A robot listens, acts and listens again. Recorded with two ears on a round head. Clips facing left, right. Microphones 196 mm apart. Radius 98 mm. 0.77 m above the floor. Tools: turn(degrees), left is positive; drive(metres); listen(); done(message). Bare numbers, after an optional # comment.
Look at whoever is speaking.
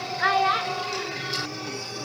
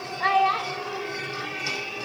# The child speaking: about 20° left or 160° left.
turn(20)
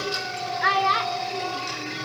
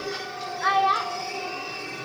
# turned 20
# So it is at 145° left.
turn(145)
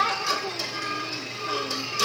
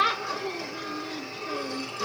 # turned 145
# The child speaking is now 20° right.
turn(-20)
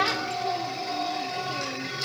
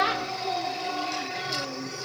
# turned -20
done("Facing the child speaking.")